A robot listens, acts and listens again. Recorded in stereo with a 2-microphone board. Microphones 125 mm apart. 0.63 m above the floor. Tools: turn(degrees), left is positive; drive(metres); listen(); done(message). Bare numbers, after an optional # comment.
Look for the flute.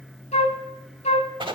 # The flute: about 65° left or 115° left.
turn(65)
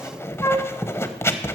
# So it is at 25° left.
turn(25)
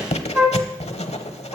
# The flute is now 15° right.
turn(-15)
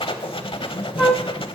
done("Found it: a flute, straight ahead.")